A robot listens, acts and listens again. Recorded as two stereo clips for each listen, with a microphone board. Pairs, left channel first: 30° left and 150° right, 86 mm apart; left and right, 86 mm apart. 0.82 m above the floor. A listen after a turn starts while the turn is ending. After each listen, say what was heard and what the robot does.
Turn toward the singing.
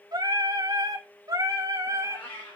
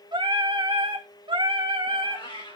The singing: 100° right. Turn 100° right.
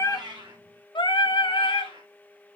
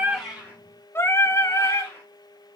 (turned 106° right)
The singing is now 40° left. Turn 40° left.
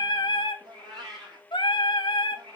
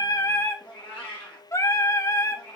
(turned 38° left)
The singing is now 35° left. Turn 35° left.
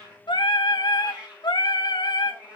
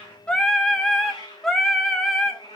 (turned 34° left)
Facing the singing, 1 to 2 m away.